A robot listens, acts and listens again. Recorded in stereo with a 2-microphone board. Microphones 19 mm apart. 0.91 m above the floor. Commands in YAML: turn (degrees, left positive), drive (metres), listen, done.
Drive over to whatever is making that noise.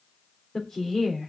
turn: 35
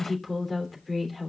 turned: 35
drive: 1.0
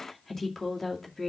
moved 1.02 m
turn: 10
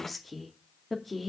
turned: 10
drive: 1.0
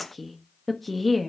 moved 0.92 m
drive: 1.0
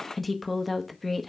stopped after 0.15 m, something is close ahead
done: "I am next to the woman speaking."